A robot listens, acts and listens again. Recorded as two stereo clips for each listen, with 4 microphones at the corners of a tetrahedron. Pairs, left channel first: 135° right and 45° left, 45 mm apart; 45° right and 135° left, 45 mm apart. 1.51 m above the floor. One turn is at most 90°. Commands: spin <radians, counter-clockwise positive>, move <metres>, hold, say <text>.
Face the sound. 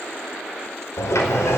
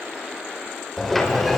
spin -1.57
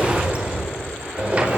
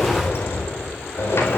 spin -0.26
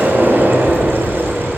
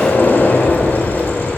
say Facing the sliding door, over 4 m away.